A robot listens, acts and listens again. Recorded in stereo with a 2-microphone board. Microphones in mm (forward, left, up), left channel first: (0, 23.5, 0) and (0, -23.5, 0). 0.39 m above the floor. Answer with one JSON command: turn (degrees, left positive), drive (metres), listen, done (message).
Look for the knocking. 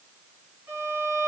{"listen": true}
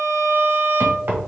{"turn": -45}
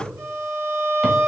{"listen": true}
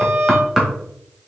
{"turn": -10}
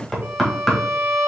{"done": "Facing the knocking, 1 to 2 m away."}